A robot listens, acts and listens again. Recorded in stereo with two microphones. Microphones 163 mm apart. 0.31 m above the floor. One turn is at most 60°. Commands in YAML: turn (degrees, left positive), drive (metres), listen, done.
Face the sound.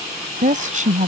turn: -50
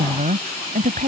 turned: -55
turn: -55
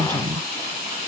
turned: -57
turn: -30
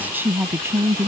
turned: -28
turn: -20
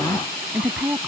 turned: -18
done: "Facing the woman speaking."